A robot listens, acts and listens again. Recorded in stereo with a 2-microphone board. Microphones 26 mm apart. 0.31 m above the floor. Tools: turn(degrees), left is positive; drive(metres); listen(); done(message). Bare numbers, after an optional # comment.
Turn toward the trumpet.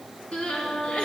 # The trumpet: about 70° left or 110° left.
turn(70)
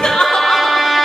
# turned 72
done("Found it: a trumpet, straight ahead, over 4 m away.")